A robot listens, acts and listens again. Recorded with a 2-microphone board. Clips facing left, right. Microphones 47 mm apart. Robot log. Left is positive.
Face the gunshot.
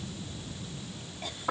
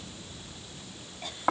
cmd idle
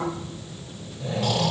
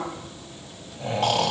cmd idle
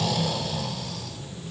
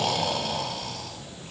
end: I can't make out a gunshot, only snoring.